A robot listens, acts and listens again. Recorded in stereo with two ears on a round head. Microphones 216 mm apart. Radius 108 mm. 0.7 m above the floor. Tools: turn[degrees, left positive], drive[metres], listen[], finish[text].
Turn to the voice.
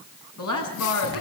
Thought: The woman speaking: about 75° left or 105° left.
Action: turn[75]
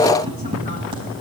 Action: listen[]
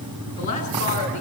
Thought: So it is at 30° left.
Action: turn[30]
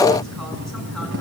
Action: listen[]
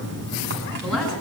Action: listen[]
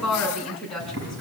Action: finish[Found it: a woman speaking, straight ahead, over 4 m away.]